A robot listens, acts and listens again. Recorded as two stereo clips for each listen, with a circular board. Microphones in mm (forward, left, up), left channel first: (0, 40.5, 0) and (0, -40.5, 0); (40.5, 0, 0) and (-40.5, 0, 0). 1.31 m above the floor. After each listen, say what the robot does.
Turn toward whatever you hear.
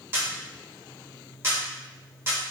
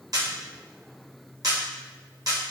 Turn 145° right.
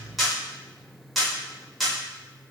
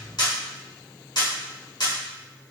Found it: a camera shutter, straight ahead.